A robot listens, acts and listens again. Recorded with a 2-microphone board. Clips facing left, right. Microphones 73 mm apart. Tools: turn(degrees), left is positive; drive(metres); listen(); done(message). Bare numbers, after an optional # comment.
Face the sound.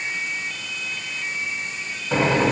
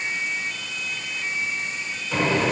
# The microwave: about 55° left or 125° left.
turn(55)
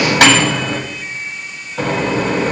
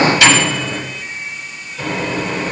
# So it is at 65° left.
turn(65)
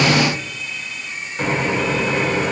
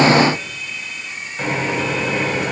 done("Facing the microwave, 2 to 4 m away.")